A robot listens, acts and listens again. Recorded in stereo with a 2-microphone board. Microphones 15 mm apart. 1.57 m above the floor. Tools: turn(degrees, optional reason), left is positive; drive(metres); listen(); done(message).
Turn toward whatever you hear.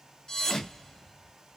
turn(degrees=35, reason="The thud: about 35° left or 145° left.")
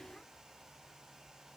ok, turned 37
listen()
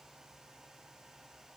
done("I heard a thud, but can't make it out now. It was about straight ahead or 105° left.")